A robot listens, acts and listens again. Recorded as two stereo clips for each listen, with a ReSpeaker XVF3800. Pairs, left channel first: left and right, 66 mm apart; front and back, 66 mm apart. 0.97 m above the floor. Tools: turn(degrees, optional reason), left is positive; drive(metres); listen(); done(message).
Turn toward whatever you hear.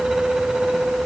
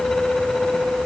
listen()
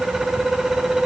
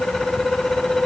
listen()
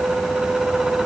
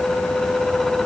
done("I can't make out anything to turn to.")